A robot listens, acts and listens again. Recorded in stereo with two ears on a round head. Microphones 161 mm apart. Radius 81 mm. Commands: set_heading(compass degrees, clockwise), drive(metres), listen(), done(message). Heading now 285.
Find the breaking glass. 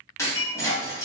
set_heading(270)
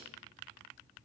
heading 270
listen()
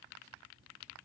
done("I heard breaking glass, but can't make it out now. It was about straight ahead or 150° left.")